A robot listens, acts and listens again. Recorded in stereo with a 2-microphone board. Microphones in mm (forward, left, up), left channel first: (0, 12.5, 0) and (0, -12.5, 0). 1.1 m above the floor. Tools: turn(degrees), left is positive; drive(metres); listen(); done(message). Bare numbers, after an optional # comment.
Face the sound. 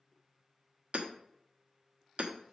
# The hammering: about 60° right or 120° right.
turn(-60)
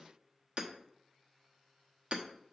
# So it is at 55° right.
turn(-55)
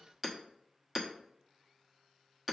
done("Found it: hammering, straight ahead.")